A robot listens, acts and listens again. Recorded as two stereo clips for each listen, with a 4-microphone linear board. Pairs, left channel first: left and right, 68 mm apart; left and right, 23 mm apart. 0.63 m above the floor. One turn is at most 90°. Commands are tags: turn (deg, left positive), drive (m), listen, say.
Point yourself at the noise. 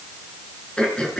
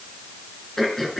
<turn deg="30"/>
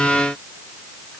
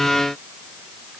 <listen/>
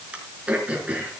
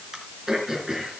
<turn deg="-20"/>
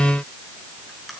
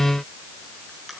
<listen/>
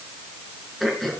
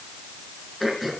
<say>Found it: throat clearing, straight ahead.</say>